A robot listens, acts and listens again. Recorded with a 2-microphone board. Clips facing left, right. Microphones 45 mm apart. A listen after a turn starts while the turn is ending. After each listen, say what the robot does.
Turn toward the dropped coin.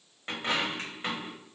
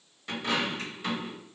Turn 40° left.
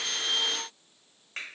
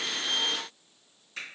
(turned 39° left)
Keep listening.
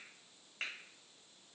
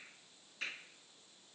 I heard a dropped coin, but can't make it out now. It was about straight ahead or 105° left.